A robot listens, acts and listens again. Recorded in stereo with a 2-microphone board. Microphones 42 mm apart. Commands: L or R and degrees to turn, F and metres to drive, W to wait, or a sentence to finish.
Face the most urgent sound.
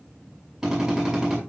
W
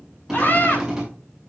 L45
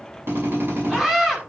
Found it: a scream, straight ahead, over 4 m away.